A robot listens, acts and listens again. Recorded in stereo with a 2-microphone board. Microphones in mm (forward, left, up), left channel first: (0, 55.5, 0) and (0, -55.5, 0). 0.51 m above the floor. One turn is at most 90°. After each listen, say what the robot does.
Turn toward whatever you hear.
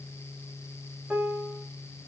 Turn 30° right.
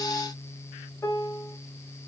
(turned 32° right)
Turn 25° left.
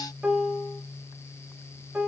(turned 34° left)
Turn 10° right.
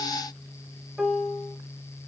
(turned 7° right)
Found it: a piano, straight ahead, 1 to 2 m away.